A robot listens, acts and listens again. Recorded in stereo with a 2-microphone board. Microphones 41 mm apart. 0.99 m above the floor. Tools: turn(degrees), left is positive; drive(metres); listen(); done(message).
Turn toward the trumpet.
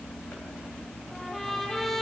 turn(degrees=30)
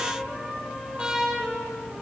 turn(degrees=-20)
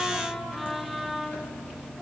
done("Found it: a trumpet, straight ahead.")